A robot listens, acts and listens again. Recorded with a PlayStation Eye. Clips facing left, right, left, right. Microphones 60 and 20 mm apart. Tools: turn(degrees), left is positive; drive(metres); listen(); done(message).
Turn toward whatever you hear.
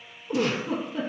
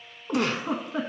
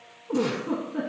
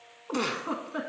turn(degrees=-65)
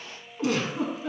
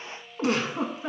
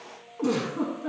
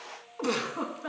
turn(degrees=-45)
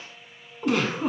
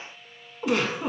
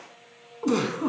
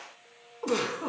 done("Found it: a giggle, straight ahead.")